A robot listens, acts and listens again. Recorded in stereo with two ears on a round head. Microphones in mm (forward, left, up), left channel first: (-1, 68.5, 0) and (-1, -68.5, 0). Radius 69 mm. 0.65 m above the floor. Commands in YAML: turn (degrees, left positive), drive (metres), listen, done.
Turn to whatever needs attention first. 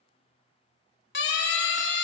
turn: 75
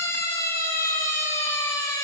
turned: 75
turn: 15
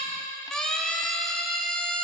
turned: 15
done: "Found it: a siren, straight ahead."